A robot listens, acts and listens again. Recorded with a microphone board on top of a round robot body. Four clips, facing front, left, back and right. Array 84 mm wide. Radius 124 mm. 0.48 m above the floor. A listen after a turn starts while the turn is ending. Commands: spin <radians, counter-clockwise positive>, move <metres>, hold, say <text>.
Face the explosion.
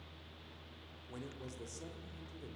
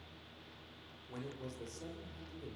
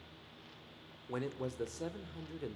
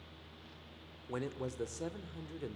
hold
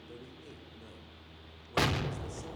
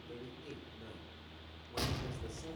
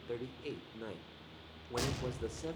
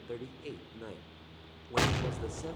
spin -0.79
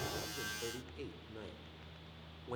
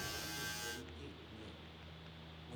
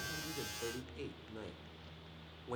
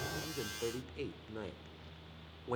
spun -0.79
say Facing where the explosion came from. I can't hear it now.